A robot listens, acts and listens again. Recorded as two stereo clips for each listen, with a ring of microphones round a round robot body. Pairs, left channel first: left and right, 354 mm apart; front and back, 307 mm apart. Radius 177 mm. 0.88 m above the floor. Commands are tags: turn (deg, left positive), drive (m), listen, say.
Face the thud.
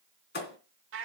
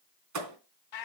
<turn deg="150"/>
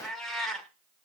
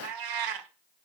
<say>I heard a thud from this way, but can't make it out now.</say>